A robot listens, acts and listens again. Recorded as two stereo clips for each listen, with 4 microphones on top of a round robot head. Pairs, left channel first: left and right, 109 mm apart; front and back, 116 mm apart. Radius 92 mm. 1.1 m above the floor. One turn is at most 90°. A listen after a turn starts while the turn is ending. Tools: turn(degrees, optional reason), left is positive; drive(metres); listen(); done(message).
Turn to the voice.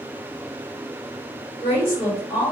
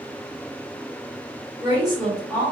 turn(degrees=90, reason="The woman speaking: 115° left.")
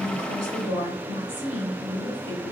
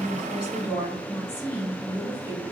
turn(degrees=30, reason="The woman speaking is now 30° left.")
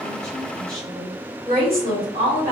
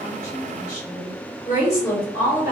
done("Found it: a woman speaking, straight ahead, 1 to 2 m away.")